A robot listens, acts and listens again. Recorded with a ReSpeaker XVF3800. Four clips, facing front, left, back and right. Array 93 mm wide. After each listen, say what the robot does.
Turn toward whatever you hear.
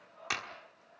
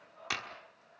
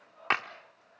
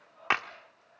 Turn 130° right.
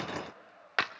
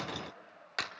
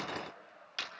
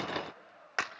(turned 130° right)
Turn 25° right.
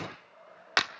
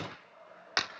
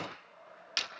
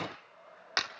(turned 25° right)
Found it: a clap, straight ahead.